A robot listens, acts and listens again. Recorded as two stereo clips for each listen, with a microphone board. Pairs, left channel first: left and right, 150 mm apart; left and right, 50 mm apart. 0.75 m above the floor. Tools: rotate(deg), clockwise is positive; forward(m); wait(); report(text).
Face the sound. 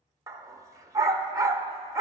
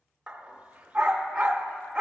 rotate(25)
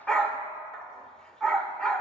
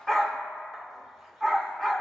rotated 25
report("Found it: a dog barking, straight ahead.")